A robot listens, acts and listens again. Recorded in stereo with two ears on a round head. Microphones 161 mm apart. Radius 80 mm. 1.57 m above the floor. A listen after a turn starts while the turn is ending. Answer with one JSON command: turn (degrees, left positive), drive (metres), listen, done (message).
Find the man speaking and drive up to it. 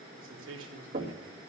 {"turn": -90}
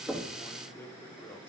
{"turn": 10}
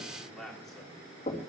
{"drive": 1.0}
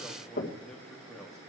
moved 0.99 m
{"listen": true}
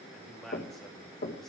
{"drive": 1.0}
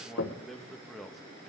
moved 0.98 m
{"drive": 1.0}
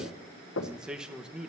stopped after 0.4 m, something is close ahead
{"done": "I am next to the man speaking."}